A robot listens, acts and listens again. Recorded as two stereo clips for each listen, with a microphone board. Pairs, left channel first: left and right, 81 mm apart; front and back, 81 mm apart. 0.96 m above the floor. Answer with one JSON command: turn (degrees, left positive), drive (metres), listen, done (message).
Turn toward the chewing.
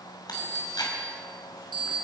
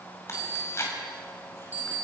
{"turn": 55}
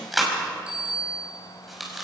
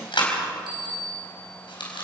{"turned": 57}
{"done": "Facing the chewing."}